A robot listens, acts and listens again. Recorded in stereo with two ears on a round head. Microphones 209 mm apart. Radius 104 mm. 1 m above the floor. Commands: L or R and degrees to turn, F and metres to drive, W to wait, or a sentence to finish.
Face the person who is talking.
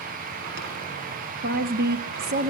R50
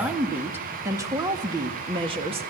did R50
R25
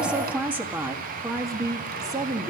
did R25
R15
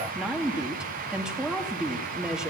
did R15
Facing the woman speaking.